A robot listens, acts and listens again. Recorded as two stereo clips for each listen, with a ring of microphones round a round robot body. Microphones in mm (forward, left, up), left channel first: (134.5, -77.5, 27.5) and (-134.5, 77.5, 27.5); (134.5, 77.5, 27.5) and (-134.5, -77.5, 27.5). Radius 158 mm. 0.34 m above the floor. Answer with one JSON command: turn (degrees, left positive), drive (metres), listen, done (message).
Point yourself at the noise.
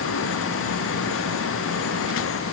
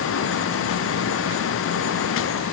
{"listen": true}
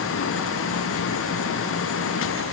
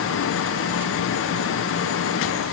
{"listen": true}
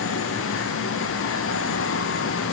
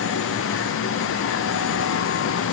{"done": "I can't make out anything to turn to."}